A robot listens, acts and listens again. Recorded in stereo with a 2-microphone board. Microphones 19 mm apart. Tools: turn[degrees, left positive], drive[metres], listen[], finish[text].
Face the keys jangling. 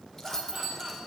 Thought: The keys jangling: about 25° left or 155° left.
Action: turn[25]
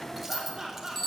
Thought: So it is at 10° right.
Action: turn[-10]
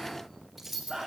Thought: The keys jangling is now 10° right.
Action: turn[-10]
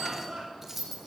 Thought: The keys jangling is now 10° right.
Action: turn[-10]
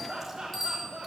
Action: listen[]
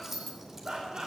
Thought: The keys jangling is now 10° right.
Action: turn[-10]
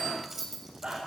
Thought: The keys jangling is now 10° right.
Action: turn[-10]
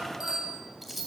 Action: finish[Found it: keys jangling, straight ahead.]